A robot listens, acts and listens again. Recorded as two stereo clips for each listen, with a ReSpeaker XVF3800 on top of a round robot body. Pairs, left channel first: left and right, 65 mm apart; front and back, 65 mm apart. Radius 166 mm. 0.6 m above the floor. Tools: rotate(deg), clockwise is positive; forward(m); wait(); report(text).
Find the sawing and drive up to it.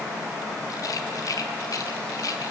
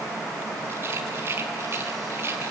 wait()
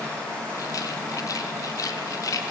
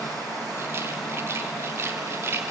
wait()
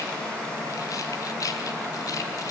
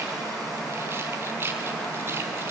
report("I can't make out sawing to turn to.")